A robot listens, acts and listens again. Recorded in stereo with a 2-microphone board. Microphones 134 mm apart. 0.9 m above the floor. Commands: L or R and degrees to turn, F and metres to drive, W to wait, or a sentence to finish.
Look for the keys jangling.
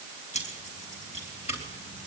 L55
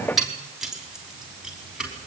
Facing the keys jangling.